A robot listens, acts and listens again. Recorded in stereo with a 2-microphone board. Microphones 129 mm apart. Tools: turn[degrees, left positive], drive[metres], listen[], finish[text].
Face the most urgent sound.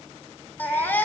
Action: turn[30]
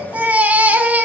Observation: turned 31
Thought: So it is at 15° right.
Action: turn[-15]
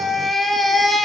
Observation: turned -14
Action: finish[Found it: a baby crying, straight ahead.]